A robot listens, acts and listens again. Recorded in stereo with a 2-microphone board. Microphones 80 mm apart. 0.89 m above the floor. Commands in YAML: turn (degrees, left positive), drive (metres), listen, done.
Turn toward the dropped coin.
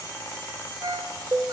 listen: true
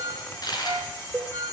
turn: 55
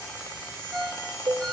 listen: true
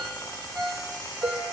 done: "I heard a dropped coin, but can't make it out now. It was about straight ahead or 70° left."